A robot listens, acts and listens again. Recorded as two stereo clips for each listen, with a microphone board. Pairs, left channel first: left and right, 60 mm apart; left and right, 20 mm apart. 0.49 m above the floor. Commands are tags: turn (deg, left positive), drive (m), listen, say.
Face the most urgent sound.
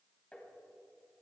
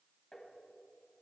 <listen/>
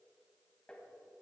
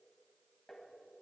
<listen/>
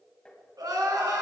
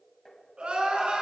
<turn deg="-90"/>
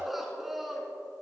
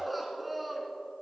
<say>Found it: crying, straight ahead, 2 to 4 m away.</say>